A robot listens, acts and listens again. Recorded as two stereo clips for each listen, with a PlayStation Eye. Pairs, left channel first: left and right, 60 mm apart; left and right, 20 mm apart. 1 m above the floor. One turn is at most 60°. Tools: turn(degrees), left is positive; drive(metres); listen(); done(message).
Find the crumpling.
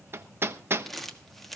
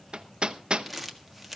turn(degrees=30)
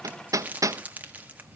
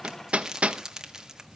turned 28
turn(degrees=-25)
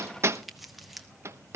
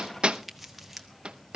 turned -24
done("Found it: crumpling, straight ahead, 1 to 2 m away.")